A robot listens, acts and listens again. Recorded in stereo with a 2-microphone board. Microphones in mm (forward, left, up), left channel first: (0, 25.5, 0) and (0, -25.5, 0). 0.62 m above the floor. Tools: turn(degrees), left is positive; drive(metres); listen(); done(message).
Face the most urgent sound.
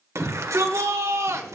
turn(degrees=-70)
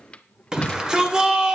turn(degrees=-15)
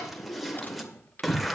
done("Facing the shout.")